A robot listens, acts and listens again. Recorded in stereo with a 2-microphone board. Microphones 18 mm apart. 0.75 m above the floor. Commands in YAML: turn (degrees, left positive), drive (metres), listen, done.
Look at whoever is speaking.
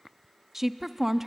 turn: -20
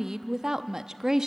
turn: -135
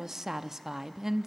turn: -30
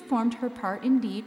done: "Found it: a woman speaking, straight ahead, under 1 m away."